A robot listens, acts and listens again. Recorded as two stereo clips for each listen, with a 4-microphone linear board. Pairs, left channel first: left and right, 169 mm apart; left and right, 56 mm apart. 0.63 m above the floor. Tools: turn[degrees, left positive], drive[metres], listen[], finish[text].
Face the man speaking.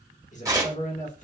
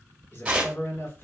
Thought: The man speaking: about 45° left or 135° left.
Action: turn[45]
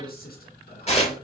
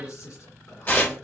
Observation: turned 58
Thought: So it is at 70° left.
Action: turn[70]
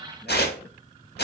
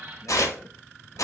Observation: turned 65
Action: listen[]
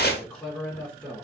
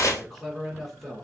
Action: finish[Facing the man speaking.]